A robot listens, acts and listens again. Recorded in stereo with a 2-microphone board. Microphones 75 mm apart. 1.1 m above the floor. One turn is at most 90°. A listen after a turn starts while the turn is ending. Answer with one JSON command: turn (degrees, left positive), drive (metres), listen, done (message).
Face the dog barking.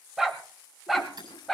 {"turn": 30}
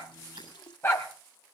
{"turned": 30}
{"turn": 90}
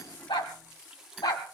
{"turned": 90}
{"turn": 60}
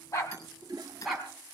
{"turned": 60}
{"done": "Facing the dog barking, 2 to 4 m away."}